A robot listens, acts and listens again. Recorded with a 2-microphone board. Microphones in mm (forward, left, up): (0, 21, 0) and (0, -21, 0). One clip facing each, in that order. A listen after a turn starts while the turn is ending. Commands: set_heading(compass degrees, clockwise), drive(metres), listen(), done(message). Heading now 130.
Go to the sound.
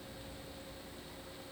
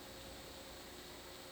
listen()
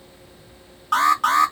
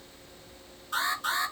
set_heading(40)
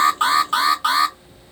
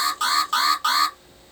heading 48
set_heading(38)
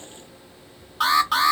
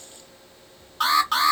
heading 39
drive(1.0)
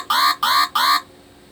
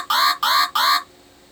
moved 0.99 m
drive(1.0)
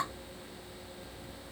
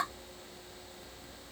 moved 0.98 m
listen()
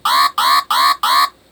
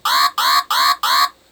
drive(1.0)
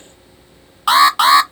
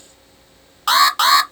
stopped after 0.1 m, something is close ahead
done("I am next to the alarm.")